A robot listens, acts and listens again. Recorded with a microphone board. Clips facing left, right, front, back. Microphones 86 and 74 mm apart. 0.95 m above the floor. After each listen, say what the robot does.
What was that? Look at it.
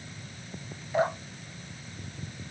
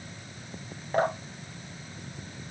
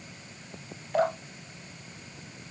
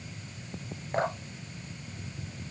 Turn 130° right.
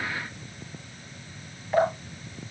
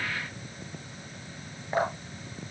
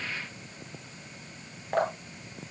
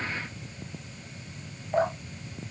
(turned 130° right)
Turn 25° right.
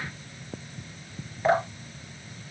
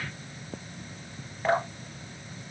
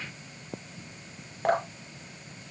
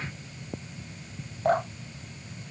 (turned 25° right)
Facing the dripping, 2 to 4 m away.